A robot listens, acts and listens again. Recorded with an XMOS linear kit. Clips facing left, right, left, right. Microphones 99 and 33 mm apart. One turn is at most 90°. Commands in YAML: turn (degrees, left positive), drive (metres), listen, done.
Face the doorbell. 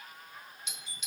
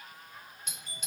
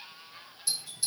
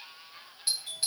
turn: -45
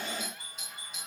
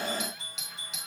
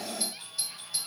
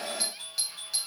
turn: -90
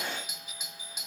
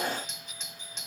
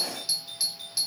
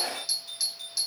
turn: 10
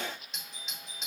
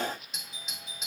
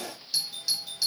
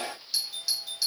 done: "Found it: a doorbell, straight ahead."